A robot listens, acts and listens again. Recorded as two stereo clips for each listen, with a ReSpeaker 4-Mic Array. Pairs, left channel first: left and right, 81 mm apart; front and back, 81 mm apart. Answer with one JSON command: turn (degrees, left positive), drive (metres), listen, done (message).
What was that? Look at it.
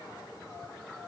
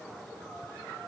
{"listen": true}
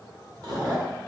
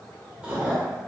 {"turn": -110}
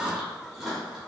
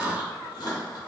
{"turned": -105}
{"done": "Facing the chewing."}